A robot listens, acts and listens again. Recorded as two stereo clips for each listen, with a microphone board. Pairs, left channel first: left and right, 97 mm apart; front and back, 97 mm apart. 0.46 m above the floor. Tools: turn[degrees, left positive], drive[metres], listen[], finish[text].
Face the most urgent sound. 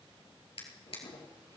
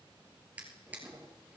Action: listen[]
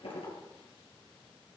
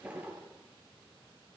Action: listen[]
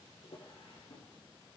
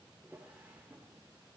Action: finish[I can't make out anything urgent, only a drawer.]